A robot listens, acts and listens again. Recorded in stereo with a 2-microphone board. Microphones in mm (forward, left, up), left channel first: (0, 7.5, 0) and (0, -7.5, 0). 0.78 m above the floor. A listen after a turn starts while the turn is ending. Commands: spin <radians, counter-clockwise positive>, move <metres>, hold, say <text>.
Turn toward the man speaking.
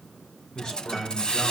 spin 0.96
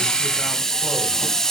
hold
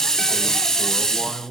spin -0.17
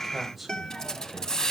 say Found it: a man speaking, straight ahead.